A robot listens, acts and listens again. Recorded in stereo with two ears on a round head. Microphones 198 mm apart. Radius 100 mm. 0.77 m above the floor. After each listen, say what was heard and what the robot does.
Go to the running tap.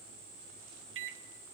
Keep listening.
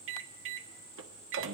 Keep listening.
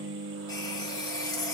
The running tap: about 20° left or 160° left. Turn 20° left.
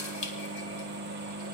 So it is at 140° left. Turn 140° left.
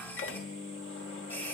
The running tap is now 10° left. Turn 10° left.
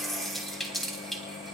Drive 1.0 m forward.
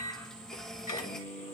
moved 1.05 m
Drive 1.0 m forward.
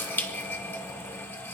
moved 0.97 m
The running tap is now 10° left. Turn 10° left.
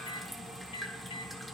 Drive 1.0 m forward.
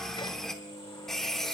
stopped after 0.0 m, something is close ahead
I am next to the running tap.